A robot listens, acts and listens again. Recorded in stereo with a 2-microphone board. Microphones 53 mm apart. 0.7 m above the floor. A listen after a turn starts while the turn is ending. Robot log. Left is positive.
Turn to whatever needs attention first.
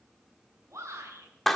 cmd yaw -90
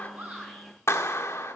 cmd idle
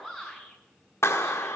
end: Found it: a shout, straight ahead.